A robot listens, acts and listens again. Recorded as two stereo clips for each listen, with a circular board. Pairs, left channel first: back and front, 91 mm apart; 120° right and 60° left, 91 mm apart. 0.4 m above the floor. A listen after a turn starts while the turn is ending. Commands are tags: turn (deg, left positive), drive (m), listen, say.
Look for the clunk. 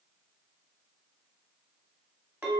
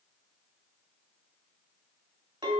<listen/>
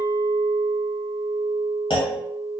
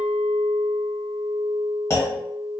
<turn deg="-175"/>
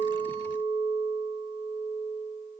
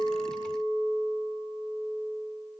<say>Facing where the clunk came from. I can't hear it now.</say>